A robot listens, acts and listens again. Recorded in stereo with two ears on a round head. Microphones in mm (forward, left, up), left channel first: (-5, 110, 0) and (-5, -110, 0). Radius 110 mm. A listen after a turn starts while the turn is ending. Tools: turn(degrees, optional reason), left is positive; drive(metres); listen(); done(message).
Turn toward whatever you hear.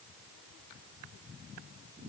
listen()
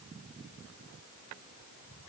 listen()
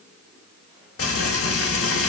turn(degrees=60, reason="The frying: about 60° left or 120° left.")
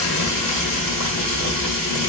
turn(degrees=60, reason="So it is at 60° left.")
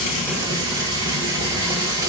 turn(degrees=-15, reason="The frying is now 15° right.")
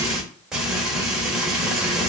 done("Facing the frying, 1 to 2 m away.")